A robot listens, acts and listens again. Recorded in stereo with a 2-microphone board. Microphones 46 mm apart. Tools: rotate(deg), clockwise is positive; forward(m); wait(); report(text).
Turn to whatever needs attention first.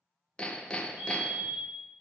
rotate(90)
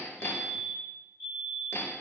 report("Found it: a fire alarm, straight ahead.")